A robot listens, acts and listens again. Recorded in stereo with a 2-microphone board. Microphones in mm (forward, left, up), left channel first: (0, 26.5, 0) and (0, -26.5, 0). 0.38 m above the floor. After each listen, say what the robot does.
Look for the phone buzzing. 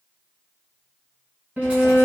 Keep listening.
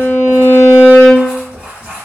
Keep listening.
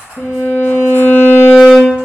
I can't make out a phone buzzing to turn to.